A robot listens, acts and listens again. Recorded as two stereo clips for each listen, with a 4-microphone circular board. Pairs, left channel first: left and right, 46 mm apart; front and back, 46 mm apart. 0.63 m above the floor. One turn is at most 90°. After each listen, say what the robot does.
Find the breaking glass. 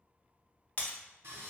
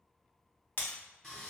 Turn 40° left.
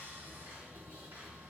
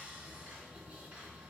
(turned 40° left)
Facing where the breaking glass came from. I can't hear it now.